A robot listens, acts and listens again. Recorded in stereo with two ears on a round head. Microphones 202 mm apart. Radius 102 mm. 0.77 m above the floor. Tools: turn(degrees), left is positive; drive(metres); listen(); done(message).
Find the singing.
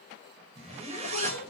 turn(degrees=90)
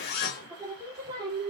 turn(degrees=-20)
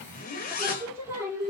turn(degrees=-15)
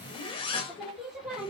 done("Facing the singing, over 4 m away.")